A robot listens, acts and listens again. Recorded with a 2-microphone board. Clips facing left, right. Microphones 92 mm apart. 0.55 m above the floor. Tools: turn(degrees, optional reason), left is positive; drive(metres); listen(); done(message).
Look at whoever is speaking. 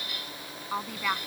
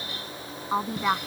turn(degrees=-25, reason="The woman speaking: about 25° right or 155° right.")
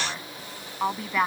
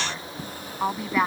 done("Facing the woman speaking.")